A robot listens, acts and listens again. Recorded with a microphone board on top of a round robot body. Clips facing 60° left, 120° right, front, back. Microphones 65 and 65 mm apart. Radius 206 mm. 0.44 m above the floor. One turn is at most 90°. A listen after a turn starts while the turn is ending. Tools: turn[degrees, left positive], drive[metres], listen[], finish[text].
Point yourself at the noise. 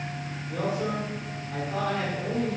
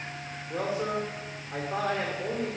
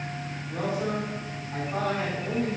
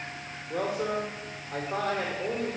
Thought: The man speaking: straight behind.
Action: turn[90]
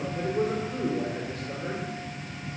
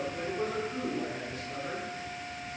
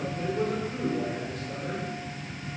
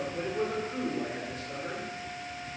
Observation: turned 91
Thought: The man speaking is now 90° left.
Action: turn[90]
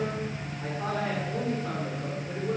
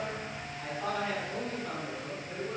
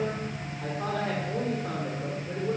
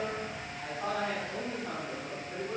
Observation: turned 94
Action: finish[Found it: a man speaking, straight ahead.]